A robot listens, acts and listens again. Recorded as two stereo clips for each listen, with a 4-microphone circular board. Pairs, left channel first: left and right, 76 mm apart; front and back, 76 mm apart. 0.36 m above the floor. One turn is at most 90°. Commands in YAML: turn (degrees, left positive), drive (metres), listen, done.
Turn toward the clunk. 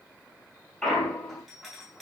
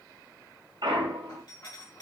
turn: 90
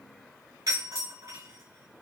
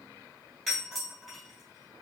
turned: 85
turn: 90
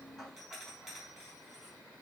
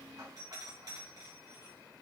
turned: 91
done: "I heard a clunk from this way, but can't make it out now."